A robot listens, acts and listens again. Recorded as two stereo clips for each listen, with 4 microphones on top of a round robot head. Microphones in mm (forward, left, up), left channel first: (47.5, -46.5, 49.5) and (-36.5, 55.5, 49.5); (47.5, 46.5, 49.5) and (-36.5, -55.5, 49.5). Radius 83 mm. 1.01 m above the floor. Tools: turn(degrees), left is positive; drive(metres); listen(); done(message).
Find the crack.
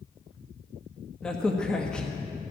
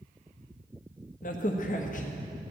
turn(degrees=35)
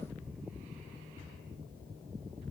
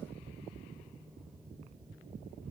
done("I heard a crack from this way, but can't make it out now.")